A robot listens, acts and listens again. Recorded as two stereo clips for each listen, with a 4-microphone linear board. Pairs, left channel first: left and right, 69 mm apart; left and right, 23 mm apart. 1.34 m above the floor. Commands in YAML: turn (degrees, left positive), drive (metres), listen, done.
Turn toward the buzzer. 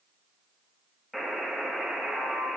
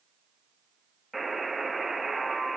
turn: 30
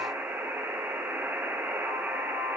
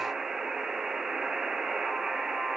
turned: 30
turn: -25
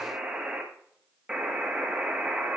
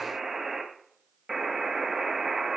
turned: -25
turn: -10
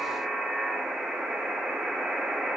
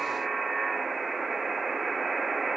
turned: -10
done: "Facing the buzzer."